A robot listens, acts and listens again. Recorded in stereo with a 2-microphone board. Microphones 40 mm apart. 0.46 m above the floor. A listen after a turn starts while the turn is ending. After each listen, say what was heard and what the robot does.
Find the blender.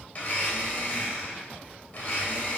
The blender: about 40° left or 140° left. Turn 40° left.
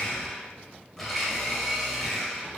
Found it: a blender, straight ahead.